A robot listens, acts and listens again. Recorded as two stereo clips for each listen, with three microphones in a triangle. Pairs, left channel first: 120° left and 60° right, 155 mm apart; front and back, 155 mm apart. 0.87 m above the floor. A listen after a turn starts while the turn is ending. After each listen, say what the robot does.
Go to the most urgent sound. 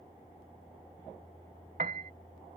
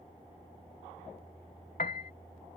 Keep listening.
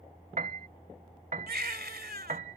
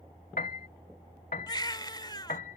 Turn 65° right.
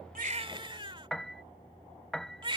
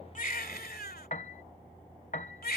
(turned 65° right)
Drive 1.0 m forward.
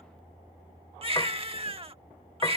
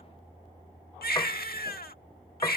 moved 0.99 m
Turn 10° right.
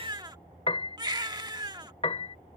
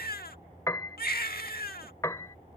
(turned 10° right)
Drive 1.0 m forward.
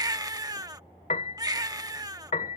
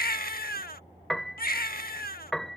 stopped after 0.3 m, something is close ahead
Arrived at the baby crying, straight ahead.